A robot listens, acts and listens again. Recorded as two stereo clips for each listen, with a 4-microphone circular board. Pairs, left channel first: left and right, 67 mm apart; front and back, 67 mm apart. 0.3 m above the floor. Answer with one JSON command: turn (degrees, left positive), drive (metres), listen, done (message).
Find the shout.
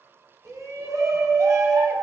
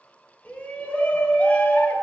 {"turn": -65}
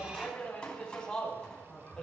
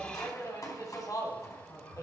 {"turn": 15}
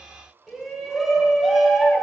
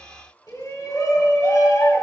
{"done": "Found it: a shout, straight ahead, 2 to 4 m away."}